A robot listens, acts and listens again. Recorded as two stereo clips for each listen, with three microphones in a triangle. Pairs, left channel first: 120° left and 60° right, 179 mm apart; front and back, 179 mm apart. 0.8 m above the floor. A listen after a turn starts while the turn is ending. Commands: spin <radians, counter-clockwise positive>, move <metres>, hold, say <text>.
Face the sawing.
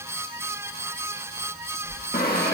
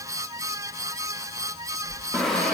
spin 1.57
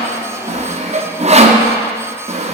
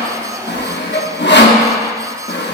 say Facing the sawing.